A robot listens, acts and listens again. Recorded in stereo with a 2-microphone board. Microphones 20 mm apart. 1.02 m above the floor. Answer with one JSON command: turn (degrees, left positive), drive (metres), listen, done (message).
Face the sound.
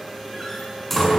{"turn": 30}
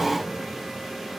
{"listen": true}
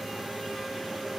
{"done": "I heard a door slam, but can't make it out now. It was about 15° right or 135° left."}